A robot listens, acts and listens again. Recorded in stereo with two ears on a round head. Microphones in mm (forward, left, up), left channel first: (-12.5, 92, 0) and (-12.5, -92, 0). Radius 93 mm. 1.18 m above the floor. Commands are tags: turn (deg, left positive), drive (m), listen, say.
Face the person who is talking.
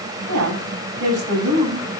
<turn deg="-90"/>
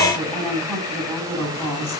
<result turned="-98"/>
<turn deg="10"/>
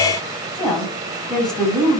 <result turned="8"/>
<say>Found it: a woman speaking, straight ahead, over 4 m away.</say>